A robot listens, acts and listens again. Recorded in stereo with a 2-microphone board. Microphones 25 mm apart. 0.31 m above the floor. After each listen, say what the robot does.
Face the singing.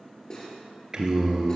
Turn 30° right.
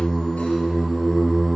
Turn 20° left.
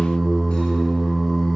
Turn 25° left.
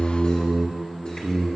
Turn 20° left.
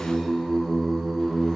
Facing the singing.